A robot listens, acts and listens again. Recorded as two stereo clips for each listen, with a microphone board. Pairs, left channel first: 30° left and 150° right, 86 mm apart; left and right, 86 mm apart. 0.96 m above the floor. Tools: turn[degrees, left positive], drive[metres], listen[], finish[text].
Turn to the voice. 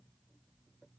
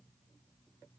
Action: listen[]
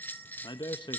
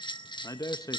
Thought: The man speaking: 50° left.
Action: turn[50]
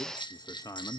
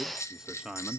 Thought: The man speaking is now 10° right.
Action: turn[-10]
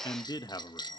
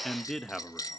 Action: finish[Facing the man speaking, under 1 m away.]